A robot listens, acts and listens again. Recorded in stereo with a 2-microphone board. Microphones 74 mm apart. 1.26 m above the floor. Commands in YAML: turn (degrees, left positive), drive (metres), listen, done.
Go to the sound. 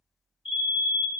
turn: -25
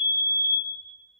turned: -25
turn: -125
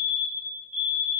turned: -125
drive: 1.0
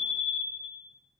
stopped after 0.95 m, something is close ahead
done: "I am next to the fire alarm."